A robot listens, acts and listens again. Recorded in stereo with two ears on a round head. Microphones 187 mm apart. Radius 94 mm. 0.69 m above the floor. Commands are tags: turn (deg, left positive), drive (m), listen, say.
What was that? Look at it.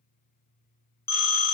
<turn deg="30"/>
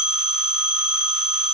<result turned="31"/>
<turn deg="-20"/>
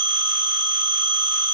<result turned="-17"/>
<say>Facing the phone ringing, under 1 m away.</say>